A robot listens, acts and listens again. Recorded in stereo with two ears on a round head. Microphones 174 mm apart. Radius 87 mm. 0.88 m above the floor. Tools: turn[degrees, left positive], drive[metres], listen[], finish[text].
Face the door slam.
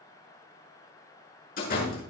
Thought: The door slam: about 50° left or 130° left.
Action: turn[50]
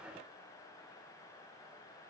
Action: listen[]
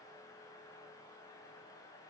Action: finish[I heard a door slam, but can't make it out now. It was about straight ahead or 80° left.]